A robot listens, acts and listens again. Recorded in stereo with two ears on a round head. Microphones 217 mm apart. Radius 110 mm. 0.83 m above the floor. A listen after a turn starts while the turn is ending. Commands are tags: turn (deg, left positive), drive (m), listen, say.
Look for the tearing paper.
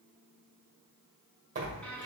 <turn deg="-35"/>
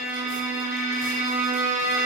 <listen/>
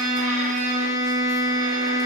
<listen/>
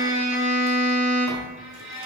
<turn deg="-110"/>
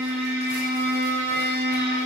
<listen/>
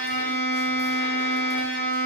<listen/>
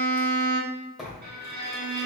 <say>Found it: tearing paper, straight ahead.</say>